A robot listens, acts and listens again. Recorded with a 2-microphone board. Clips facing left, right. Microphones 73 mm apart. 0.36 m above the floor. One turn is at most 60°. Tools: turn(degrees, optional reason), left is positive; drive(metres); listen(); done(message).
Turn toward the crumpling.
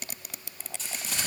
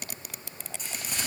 turn(degrees=-30)
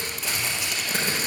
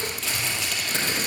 turn(degrees=10, reason="So it is at 10° left.")
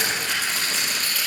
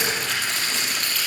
done("Facing the crumpling.")